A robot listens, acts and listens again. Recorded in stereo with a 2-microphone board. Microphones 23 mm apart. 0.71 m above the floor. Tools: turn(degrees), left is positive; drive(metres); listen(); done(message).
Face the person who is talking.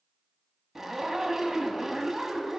listen()
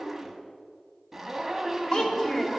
turn(degrees=40)
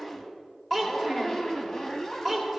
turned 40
done("Facing the child speaking.")